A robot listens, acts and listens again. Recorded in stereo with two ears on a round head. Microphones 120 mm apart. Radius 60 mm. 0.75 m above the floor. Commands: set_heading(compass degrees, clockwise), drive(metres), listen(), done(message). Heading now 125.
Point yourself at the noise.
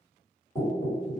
set_heading(95)
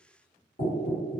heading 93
set_heading(333)
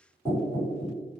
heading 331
done("Found it: knocking, straight ahead.")